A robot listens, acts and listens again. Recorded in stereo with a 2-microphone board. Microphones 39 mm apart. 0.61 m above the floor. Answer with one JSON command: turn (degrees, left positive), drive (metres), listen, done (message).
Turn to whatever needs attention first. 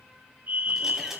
{"turn": -60}
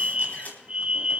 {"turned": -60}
{"turn": -35}
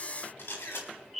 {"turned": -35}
{"done": "Found it: a fire alarm, straight ahead, 2 to 4 m away."}